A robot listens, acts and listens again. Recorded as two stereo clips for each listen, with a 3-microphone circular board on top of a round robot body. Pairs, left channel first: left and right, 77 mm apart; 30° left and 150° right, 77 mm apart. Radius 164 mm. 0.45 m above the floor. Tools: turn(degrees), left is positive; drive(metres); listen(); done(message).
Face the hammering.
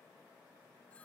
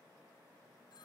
listen()
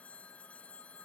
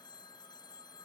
listen()
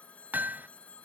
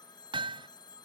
turn(degrees=-160)
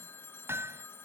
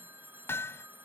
turn(degrees=-30)
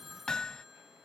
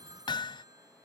turn(degrees=10)
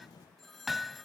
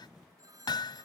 done("Facing the hammering.")